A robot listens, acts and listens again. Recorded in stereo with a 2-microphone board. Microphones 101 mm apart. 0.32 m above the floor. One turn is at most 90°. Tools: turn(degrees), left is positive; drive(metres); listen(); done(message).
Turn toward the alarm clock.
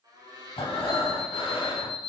turn(degrees=40)
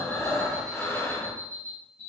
turn(degrees=90)
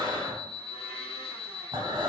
turn(degrees=10)
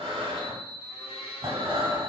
done("Found it: an alarm clock, straight ahead, under 1 m away.")